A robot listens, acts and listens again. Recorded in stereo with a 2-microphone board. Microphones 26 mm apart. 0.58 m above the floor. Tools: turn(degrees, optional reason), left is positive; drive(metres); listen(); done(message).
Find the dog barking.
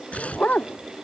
turn(degrees=60, reason="The dog barking: about 60° left or 120° left.")
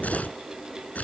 listen()
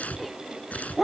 done("Facing the dog barking.")